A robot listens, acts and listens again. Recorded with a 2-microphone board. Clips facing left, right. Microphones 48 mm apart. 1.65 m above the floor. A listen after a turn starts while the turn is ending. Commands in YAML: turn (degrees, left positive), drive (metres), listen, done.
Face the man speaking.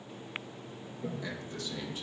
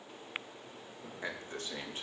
turn: -35
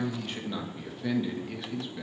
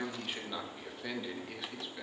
done: "Found it: a man speaking, straight ahead, 2 to 4 m away."